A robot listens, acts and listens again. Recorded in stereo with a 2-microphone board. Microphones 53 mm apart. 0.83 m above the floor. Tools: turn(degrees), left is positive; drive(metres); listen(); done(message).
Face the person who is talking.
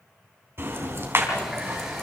listen()
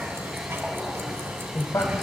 turn(degrees=65)
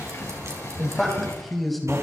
done("Facing the man speaking.")